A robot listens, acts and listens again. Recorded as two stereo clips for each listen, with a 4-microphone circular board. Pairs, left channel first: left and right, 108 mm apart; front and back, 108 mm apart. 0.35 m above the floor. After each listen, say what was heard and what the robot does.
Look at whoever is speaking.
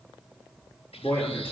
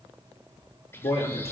The man speaking: 20° left. Turn 20° left.
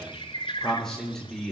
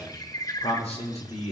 Facing the man speaking, over 4 m away.